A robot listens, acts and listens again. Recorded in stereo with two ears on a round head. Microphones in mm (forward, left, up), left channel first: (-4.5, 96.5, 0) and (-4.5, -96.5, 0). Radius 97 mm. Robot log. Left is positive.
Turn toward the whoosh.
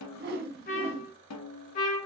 note: The whoosh: about 50° right or 130° right.
cmd yaw -50
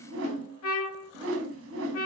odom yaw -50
note: So it is at 75° right.
cmd yaw -75
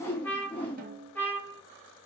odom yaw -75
note: The whoosh is now 10° left.
cmd yaw +10
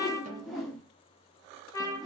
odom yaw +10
end: Found it: a whoosh, straight ahead, under 1 m away.